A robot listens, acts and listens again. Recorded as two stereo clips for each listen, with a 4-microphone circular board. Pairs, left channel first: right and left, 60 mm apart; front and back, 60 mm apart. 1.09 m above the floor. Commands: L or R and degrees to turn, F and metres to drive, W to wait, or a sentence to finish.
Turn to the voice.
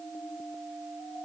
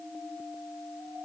W
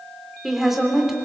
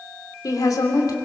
Facing the woman speaking, 2 to 4 m away.